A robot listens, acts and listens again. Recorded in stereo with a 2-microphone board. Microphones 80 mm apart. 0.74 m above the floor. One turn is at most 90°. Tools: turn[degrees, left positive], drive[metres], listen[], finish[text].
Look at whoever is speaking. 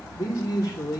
Thought: The man speaking: about 45° left or 135° left.
Action: turn[45]
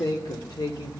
Thought: So it is at 80° left.
Action: turn[80]
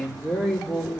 Thought: The man speaking is now 10° left.
Action: turn[10]
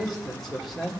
Action: finish[Facing the man speaking, 2 to 4 m away.]